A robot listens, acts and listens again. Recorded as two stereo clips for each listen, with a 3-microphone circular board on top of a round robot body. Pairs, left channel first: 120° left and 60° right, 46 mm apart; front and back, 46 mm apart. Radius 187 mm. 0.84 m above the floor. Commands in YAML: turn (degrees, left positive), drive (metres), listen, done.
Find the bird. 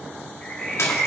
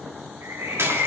turn: -160
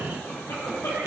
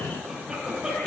listen: true
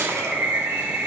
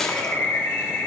turn: -20
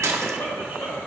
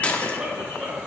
listen: true
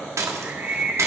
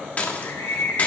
done: "Found it: a bird, straight ahead, 2 to 4 m away."